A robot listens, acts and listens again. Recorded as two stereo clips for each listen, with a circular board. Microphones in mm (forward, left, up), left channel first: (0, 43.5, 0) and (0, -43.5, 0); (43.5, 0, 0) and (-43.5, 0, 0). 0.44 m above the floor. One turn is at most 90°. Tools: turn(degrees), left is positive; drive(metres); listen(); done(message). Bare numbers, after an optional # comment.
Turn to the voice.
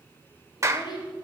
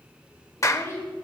# The child speaking: 60° left.
turn(60)
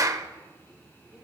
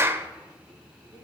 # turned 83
# Nothing new. It was at 25° right.
turn(-25)
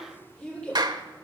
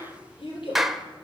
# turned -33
# The child speaking is now 10° left.
turn(10)
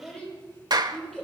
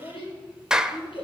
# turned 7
done("Facing the child speaking.")